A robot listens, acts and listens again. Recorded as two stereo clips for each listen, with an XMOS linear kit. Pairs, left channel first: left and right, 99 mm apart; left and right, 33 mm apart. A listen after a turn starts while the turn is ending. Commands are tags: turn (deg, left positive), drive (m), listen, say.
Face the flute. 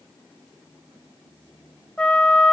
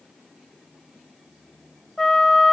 <turn deg="30"/>
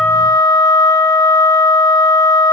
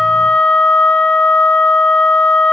<turn deg="135"/>
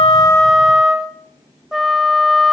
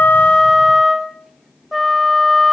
<say>Facing the flute, under 1 m away.</say>